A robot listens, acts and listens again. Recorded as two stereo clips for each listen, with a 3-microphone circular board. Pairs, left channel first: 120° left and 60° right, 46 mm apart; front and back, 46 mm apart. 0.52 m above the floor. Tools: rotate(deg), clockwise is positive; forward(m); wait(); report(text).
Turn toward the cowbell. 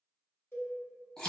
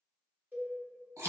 rotate(-135)
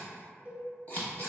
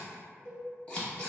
report("Found it: a cowbell, straight ahead.")